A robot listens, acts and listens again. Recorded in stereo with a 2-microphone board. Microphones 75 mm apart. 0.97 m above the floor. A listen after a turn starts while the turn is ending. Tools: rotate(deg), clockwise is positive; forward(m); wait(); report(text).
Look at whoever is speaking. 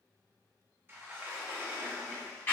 wait()
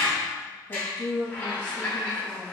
rotate(-75)
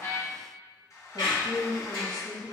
report("Facing the woman speaking.")